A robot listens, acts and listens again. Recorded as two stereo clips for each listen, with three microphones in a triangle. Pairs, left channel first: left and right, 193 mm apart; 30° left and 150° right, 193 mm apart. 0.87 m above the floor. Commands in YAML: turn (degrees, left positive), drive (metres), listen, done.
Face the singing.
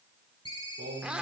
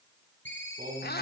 turn: -110
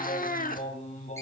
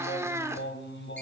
turn: 40
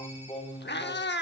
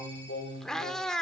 turn: 25
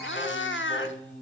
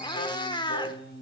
turn: 10
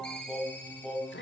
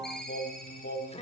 done: "Found it: singing, straight ahead."